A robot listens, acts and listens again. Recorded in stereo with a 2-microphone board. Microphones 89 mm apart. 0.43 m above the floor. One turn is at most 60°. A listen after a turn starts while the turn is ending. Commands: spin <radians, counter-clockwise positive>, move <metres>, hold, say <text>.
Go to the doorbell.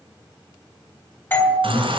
spin 0.44
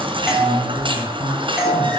move 1.0
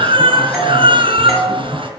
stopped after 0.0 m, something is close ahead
spin 0.17
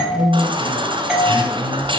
say Something is in my way. I am facing the doorbell but have not reached it.